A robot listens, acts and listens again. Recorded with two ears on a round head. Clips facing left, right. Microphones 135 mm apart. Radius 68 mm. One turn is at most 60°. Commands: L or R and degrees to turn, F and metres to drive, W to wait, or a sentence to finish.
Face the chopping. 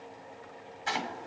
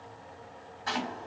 L25
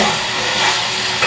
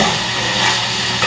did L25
W
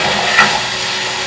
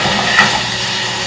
W
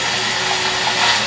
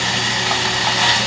I heard chopping, but can't make it out now. It was about straight ahead or 130° left.